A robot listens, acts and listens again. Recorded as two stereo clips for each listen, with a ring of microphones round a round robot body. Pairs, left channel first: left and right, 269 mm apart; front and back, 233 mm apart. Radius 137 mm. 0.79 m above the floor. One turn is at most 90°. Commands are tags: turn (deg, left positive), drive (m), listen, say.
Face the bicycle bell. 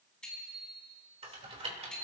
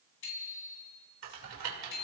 <say>Found it: a bicycle bell, straight ahead.</say>